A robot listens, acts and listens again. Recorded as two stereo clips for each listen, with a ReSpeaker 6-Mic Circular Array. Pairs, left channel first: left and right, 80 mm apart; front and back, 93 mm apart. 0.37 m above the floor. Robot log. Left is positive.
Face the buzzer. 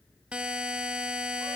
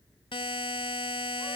note: The buzzer: 15° right.
cmd yaw -15
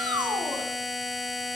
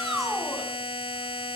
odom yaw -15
end: Facing the buzzer.